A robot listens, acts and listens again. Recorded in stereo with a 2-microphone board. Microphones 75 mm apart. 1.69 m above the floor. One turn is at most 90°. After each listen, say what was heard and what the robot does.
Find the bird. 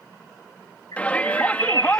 The bird: about 65° left or 115° left. Turn 65° left.
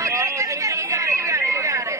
Found it: a bird, straight ahead.